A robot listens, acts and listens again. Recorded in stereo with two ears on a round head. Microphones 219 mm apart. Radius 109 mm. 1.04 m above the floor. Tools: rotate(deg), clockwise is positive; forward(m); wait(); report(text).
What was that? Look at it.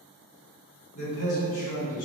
rotate(-75)
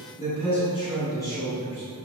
rotate(-10)
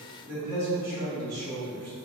rotate(20)
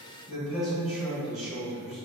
report("Found it: a man speaking, straight ahead.")